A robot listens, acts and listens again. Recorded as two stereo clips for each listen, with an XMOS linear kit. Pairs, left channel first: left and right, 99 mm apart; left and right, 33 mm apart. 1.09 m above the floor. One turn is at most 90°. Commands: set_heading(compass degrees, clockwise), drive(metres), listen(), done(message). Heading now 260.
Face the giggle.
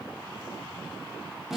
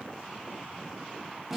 listen()
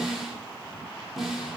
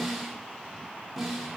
listen()
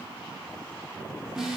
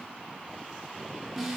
done("I can't make out a giggle, only a snare drum.")